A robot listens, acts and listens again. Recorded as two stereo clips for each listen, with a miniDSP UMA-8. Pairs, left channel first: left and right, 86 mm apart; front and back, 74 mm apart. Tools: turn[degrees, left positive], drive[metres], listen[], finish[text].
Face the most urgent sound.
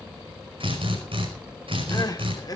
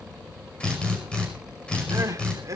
Thought: The crying: 135° left.
Action: turn[135]
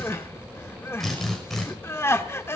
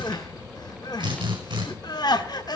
Thought: The crying is now 25° left.
Action: turn[25]
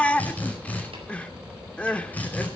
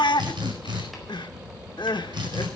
Thought: The crying is now 10° left.
Action: turn[10]
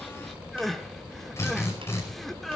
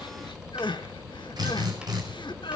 Action: finish[Facing the crying, 1 to 2 m away.]